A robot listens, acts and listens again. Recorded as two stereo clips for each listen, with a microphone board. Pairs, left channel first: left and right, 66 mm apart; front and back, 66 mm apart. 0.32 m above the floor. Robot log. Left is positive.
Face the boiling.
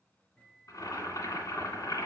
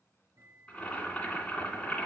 note: The boiling: 70° left.
cmd yaw +70
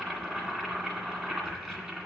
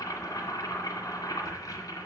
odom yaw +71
end: Found it: boiling, straight ahead.